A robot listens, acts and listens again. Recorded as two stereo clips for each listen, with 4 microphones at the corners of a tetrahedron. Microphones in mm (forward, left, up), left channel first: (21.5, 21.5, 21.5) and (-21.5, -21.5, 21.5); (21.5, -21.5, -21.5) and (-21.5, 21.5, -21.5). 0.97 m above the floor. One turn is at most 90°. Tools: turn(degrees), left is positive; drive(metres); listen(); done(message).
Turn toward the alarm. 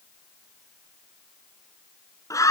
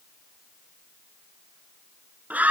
listen()
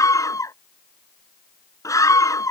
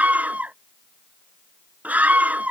listen()
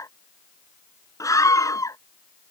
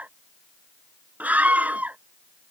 done("I can't make out an alarm, only a scream.")